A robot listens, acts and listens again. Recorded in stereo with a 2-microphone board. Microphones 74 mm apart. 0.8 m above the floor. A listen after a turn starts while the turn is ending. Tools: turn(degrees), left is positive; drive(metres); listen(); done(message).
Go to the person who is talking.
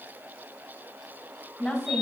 turn(degrees=30)
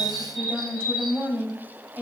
turn(degrees=-30)
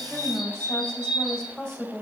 drive(metres=1.0)
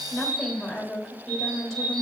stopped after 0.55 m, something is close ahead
done("Blocked. The woman speaking is further on, straight ahead.")